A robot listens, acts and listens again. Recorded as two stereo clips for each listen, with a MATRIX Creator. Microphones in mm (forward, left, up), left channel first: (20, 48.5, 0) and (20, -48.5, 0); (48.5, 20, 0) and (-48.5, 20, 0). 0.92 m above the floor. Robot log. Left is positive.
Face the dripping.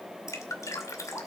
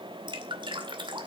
note: The dripping: 145° left.
cmd yaw +145
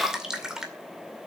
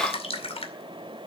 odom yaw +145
end: Facing the dripping, 2 to 4 m away.